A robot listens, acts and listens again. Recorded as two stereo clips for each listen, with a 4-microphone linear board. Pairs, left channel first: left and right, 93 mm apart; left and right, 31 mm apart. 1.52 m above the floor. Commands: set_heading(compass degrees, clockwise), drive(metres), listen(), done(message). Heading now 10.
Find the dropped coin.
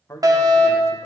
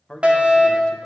listen()
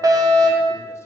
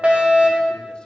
listen()
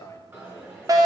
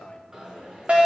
set_heading(35)
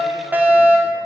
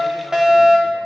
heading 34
listen()
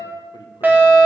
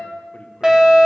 done("I heard a dropped coin, but can't make it out now. It was about straight ahead or 130° right.")